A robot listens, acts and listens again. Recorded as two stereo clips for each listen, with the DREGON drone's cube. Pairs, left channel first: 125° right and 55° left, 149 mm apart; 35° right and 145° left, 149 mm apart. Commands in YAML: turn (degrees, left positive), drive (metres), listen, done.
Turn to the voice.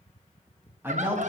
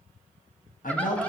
turn: -20
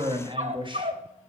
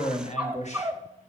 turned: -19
done: "Facing the man speaking."